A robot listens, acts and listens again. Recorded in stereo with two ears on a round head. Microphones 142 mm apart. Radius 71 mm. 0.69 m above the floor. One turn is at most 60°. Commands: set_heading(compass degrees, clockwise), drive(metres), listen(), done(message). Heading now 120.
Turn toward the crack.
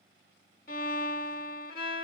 listen()
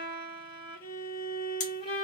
set_heading(70)
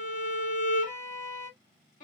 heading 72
listen()
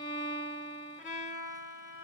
done("I heard a crack, but can't make it out now. It was about 5° left or 80° left.")